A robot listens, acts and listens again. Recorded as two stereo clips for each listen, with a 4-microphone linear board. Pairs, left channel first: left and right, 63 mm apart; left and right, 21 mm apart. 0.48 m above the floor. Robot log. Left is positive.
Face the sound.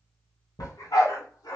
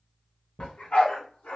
cmd yaw +90
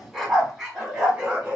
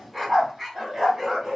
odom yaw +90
note: So it is at 20° right.
cmd yaw -20
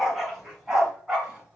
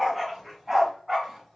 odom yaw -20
note: The dog barking is now 15° right.
cmd yaw -15
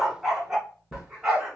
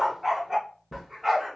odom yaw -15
note: The dog barking is now 10° right.
cmd yaw -10
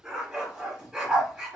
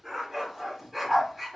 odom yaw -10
end: Found it: a dog barking, straight ahead, 2 to 4 m away.